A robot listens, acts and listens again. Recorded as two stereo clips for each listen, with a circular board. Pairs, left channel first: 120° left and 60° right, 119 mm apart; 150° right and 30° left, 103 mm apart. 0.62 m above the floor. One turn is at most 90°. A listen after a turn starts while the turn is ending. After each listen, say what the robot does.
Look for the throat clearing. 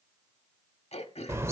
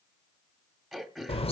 Turn 90° left.
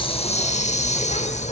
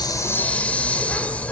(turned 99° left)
Turn 15° left.
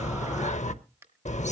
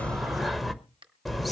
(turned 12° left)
Facing the throat clearing.